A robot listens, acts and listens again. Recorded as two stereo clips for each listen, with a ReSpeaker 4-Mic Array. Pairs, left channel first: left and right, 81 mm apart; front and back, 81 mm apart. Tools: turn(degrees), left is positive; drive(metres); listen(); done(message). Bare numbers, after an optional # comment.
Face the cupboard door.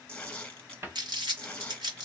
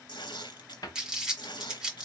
# The cupboard door: 35° right.
turn(-35)
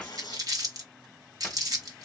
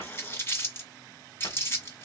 # The cupboard door is now 10° left.
turn(10)
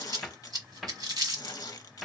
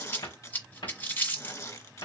done("Facing the cupboard door, 1 to 2 m away.")